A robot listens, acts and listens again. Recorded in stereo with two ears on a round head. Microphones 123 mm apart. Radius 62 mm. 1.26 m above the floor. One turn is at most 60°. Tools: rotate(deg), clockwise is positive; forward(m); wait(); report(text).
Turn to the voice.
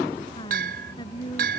rotate(-30)
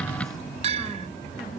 wait()
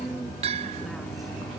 wait()
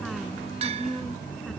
report("I heard a woman speaking, but can't make it out now. It was about straight ahead or 120° left.")